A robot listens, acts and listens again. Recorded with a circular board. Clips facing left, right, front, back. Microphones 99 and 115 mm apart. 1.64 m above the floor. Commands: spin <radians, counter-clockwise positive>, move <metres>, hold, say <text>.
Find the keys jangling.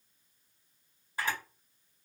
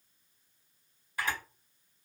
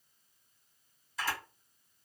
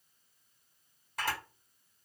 hold
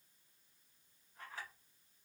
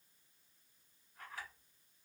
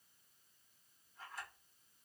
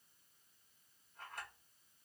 hold
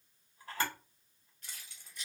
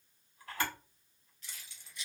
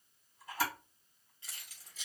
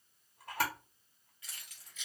spin 0.87
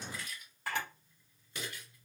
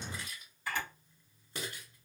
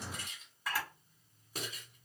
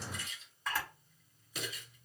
spin -0.70
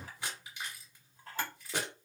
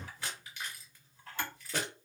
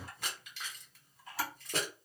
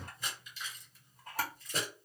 spin 0.26
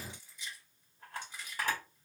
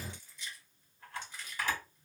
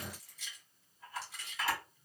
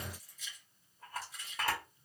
spin 0.17
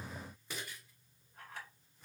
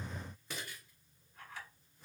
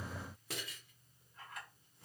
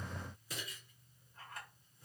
say Found it: keys jangling, straight ahead.